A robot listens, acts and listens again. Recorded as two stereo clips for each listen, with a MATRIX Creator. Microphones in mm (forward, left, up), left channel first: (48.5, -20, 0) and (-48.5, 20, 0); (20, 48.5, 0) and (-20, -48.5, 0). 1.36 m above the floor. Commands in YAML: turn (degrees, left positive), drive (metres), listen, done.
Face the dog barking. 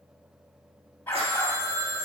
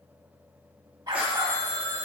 turn: -85
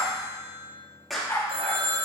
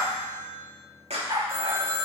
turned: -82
turn: -80
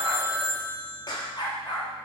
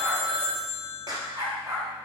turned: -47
turn: -60
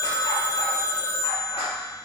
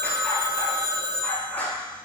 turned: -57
listen: true
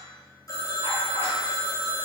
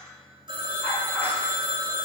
listen: true
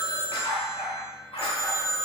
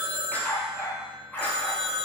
done: "Found it: a dog barking, straight ahead, 2 to 4 m away."